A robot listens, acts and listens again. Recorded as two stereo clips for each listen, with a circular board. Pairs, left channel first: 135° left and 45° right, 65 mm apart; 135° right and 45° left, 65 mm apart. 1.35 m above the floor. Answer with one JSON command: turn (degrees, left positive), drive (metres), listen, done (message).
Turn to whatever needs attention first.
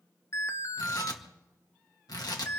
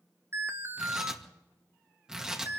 {"turn": 90}
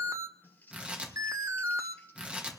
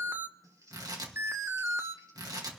{"turn": -10}
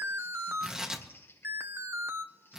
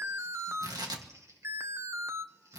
{"done": "Found it: an alarm, straight ahead."}